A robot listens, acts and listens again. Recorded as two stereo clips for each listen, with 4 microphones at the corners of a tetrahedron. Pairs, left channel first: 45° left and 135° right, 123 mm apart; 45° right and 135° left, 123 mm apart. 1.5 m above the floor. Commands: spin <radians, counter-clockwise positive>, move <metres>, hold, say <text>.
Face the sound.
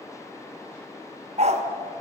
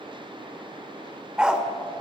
spin -2.53
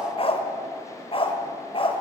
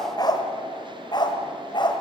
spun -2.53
say Facing the dog barking, 2 to 4 m away.